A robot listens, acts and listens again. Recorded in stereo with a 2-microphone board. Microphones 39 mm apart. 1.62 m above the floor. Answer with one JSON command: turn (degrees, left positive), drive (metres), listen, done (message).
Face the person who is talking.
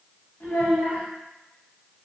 {"turn": 60}
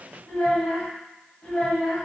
{"turn": 45}
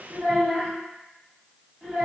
{"done": "Facing the child speaking, 1 to 2 m away."}